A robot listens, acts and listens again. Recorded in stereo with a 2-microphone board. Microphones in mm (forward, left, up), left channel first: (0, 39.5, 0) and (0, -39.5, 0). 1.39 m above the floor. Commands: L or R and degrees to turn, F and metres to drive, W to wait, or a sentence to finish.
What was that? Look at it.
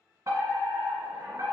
R45
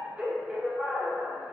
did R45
R15
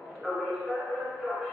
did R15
Found it: a fire alarm, straight ahead.